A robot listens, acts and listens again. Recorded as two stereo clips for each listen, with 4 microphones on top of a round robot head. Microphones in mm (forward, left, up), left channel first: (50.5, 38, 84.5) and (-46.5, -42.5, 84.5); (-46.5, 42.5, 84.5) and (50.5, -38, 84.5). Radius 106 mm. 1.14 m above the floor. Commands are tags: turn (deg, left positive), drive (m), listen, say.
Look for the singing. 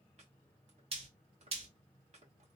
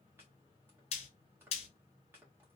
<listen/>
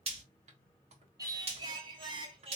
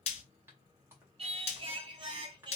<turn deg="-95"/>
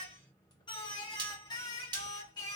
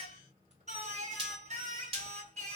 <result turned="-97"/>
<turn deg="-15"/>
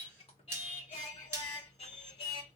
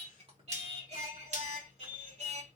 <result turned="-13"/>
<say>Facing the singing, 2 to 4 m away.</say>